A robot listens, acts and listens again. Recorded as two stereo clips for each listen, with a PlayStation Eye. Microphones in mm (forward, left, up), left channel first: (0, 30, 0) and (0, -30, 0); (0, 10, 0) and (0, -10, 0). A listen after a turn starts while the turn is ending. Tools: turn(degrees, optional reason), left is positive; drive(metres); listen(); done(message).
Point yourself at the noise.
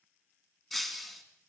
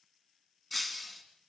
turn(degrees=30)
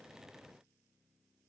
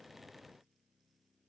listen()
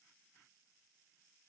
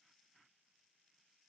done("I heard breaking glass, but can't make it out now. It was about 25° right or 145° left.")